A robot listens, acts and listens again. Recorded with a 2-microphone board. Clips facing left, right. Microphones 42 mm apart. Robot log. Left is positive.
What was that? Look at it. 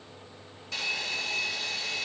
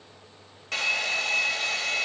note: The hair dryer: about 60° right or 120° right.
cmd yaw -60
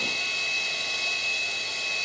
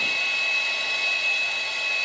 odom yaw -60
note: So it is at 20° right.
cmd yaw -20
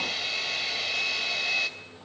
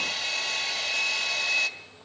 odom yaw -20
end: Found it: a hair dryer, straight ahead, 2 to 4 m away.